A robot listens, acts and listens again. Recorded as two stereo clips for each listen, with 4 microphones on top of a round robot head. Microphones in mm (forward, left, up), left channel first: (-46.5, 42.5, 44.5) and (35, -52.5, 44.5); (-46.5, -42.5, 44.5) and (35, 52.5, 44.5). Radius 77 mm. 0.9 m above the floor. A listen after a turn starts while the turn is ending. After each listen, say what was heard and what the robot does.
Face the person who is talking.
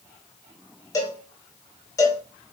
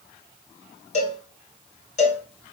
Keep listening.
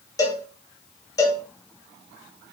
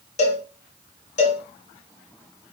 Keep listening.
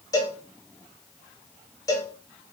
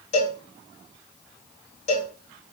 I can't make out anyone speaking to turn to.